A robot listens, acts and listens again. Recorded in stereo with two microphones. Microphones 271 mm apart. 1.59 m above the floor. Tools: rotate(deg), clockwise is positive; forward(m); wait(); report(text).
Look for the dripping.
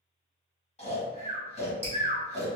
rotate(40)
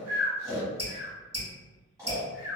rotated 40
rotate(95)
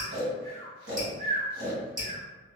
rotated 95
rotate(35)
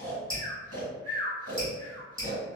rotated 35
rotate(10)
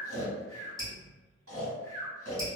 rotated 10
report("Found it: dripping, straight ahead.")